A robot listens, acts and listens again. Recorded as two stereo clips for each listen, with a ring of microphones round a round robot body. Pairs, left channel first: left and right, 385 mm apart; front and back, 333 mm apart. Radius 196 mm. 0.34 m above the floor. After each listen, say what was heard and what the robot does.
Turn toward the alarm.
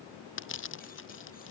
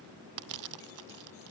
Keep listening.
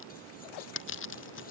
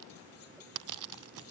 Keep listening.
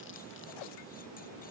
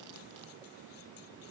I can't make out an alarm to turn to.